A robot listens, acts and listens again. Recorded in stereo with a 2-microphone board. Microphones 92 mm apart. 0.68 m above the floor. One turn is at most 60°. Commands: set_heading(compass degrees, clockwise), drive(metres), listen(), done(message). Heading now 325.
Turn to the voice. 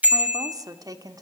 set_heading(5)
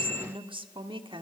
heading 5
set_heading(65)
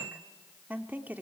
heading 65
set_heading(85)
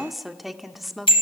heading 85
done("Facing the woman speaking.")